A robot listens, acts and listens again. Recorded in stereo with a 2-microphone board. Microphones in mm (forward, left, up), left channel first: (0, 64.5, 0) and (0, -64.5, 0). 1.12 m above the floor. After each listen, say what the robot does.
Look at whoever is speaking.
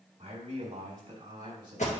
Turn 40° right.
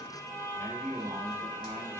Turn 115° right.
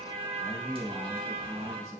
Turn 55° right.
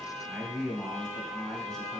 Found it: a man speaking, straight ahead.